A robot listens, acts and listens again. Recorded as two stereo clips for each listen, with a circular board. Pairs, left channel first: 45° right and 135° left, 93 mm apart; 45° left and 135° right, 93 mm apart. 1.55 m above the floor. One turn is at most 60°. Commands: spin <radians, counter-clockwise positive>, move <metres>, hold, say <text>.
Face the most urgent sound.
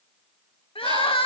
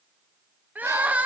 spin -1.05
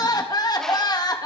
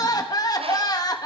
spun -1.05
say Found it: crying, straight ahead.